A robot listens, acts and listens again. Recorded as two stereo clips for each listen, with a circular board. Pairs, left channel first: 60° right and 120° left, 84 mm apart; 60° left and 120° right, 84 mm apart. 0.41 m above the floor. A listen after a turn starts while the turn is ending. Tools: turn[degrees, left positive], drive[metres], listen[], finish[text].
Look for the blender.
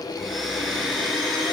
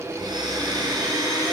Thought: The blender: 150° right.
Action: turn[-150]
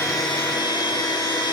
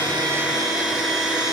Thought: The blender is now 35° right.
Action: turn[-35]
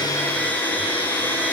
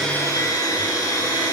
Thought: The blender is now 10° left.
Action: turn[10]
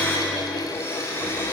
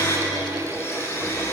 Action: finish[Found it: a blender, straight ahead, over 4 m away.]